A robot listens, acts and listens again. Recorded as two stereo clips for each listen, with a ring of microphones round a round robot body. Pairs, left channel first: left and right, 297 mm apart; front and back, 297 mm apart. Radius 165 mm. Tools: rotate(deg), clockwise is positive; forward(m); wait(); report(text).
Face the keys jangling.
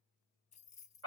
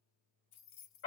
rotate(-25)
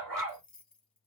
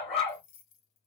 report("Found it: keys jangling, straight ahead.")